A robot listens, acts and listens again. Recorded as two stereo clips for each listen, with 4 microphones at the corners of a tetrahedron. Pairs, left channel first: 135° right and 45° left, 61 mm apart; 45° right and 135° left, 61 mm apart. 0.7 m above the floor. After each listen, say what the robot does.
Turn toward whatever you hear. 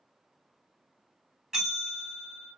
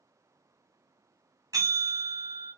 Turn 125° left.
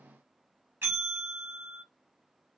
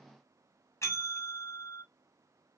Turn 10° right.
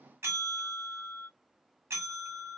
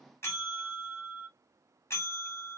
Found it: a bell, straight ahead, 1 to 2 m away.